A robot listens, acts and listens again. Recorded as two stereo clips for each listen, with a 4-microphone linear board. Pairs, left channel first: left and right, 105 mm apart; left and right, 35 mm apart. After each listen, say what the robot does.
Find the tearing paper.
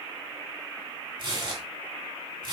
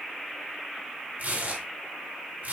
Turn 50° right.
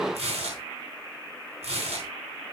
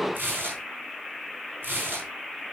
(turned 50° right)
Turn 80° right.
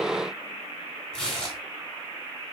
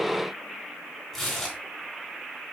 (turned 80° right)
Turn 10° left.
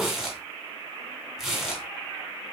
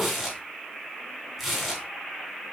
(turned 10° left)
Found it: tearing paper, straight ahead.